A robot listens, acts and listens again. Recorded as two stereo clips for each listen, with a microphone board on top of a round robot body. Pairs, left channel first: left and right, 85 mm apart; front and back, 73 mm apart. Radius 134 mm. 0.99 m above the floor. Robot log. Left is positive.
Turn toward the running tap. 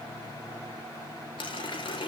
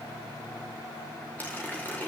note: The running tap: 70° left.
cmd yaw +70
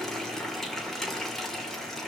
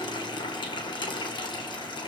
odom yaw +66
end: Found it: a running tap, straight ahead, 2 to 4 m away.